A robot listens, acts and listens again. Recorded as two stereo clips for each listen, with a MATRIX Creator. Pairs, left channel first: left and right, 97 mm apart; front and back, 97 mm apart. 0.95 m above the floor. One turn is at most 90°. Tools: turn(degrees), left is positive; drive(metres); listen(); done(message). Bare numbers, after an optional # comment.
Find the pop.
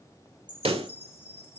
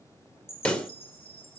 # The pop: 80° right.
turn(-80)
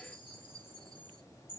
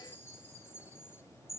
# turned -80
done("Facing where the pop came from. I can't hear it now.")